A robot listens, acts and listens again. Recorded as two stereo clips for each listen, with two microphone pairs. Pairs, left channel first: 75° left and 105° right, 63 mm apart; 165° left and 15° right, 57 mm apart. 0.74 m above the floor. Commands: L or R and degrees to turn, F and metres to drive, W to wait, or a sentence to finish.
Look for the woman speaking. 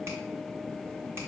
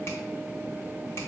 W
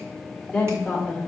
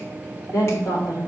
L165
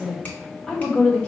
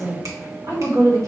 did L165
Facing the woman speaking, 2 to 4 m away.